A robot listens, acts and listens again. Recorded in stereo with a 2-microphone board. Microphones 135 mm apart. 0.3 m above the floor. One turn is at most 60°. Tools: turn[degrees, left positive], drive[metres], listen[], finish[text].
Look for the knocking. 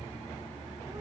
Action: listen[]
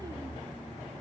Action: listen[]
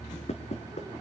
Thought: The knocking: about 55° left or 125° left.
Action: turn[55]
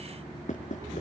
Thought: So it is at 70° left.
Action: turn[60]
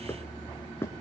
Thought: The knocking is now 20° left.
Action: turn[20]
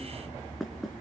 Action: finish[Facing the knocking, 2 to 4 m away.]